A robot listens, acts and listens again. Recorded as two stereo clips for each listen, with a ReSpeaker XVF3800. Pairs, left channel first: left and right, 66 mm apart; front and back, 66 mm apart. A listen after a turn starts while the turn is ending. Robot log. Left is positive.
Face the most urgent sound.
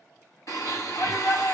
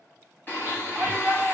note: The shout: 105° left.
cmd yaw +105
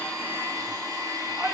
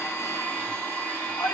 cmd idle
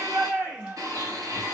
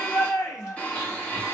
note: The shout is now 25° right.
cmd yaw -25
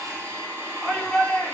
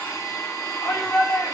end: Facing the shout, 1 to 2 m away.